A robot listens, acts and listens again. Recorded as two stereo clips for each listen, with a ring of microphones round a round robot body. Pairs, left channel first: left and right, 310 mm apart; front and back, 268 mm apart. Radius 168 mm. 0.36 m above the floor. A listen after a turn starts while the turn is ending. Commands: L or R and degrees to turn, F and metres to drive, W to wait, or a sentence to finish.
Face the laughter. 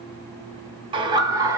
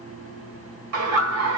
R170
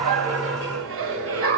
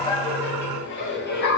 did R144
R50
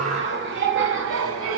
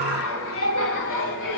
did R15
R45
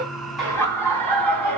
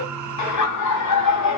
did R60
Found it: laughter, straight ahead.